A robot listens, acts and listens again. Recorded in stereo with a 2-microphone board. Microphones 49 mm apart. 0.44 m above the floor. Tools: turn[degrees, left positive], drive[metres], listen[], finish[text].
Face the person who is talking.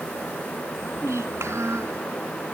Action: turn[-90]
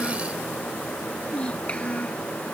Thought: So it is at 25° left.
Action: turn[25]
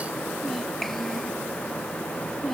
Action: finish[Found it: a child speaking, straight ahead.]